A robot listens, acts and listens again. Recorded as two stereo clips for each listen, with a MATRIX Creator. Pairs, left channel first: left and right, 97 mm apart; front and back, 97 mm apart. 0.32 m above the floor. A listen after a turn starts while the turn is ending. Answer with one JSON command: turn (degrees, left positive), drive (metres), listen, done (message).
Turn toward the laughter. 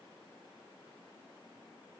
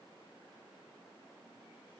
{"listen": true}
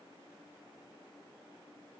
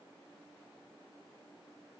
{"listen": true}
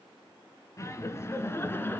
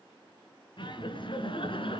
{"turn": 25}
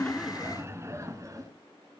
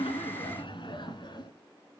{"turn": -35}
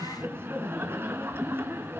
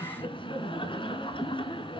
{"turn": -25}
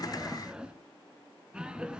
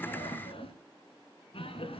{"turn": -10}
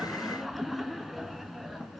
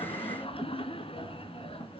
{"done": "Facing the laughter, 2 to 4 m away."}